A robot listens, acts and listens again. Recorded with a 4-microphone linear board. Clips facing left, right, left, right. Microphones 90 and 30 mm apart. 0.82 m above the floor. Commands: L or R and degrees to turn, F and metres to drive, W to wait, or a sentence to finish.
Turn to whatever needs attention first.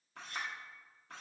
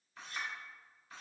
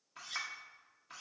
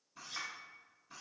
W
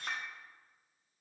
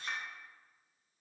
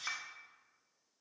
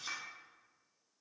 W
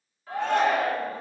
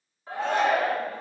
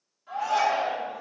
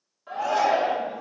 R25
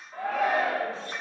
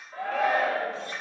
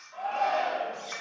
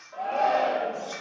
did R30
Found it: a shout, straight ahead, 1 to 2 m away.